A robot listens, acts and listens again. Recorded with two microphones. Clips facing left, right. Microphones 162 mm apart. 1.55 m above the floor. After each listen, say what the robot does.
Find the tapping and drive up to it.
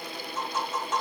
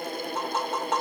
Turn 65° right.
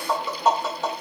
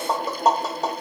Turn 40° right.
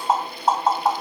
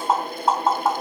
Drive 1.0 m forward.
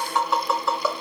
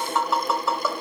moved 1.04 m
Drive 1.0 m forward.
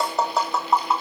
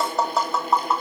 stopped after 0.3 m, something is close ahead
Arrived at the tapping, straight ahead.